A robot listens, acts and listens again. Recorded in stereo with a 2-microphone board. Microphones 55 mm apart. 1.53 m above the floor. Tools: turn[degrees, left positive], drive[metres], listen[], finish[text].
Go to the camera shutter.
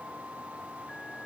Action: listen[]
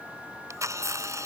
Thought: The camera shutter: about 70° right or 110° right.
Action: turn[-70]
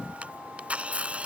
Thought: So it is at 25° right.
Action: turn[-25]
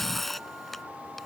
Action: drive[1.0]
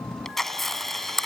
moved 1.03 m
Action: drive[1.0]
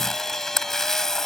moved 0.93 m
Thought: The camera shutter is now 10° left.
Action: turn[10]
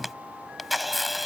Action: drive[1.0]
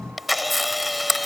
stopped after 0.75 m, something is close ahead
Action: finish[I am next to the camera shutter.]